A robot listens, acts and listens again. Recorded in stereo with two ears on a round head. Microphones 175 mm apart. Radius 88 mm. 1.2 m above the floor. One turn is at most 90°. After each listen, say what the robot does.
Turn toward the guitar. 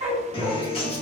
Turn 30° left.
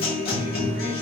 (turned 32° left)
Turn 90° left.
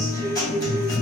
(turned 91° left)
Turn 20° left.
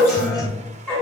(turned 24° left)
Found it: a guitar, straight ahead, 1 to 2 m away.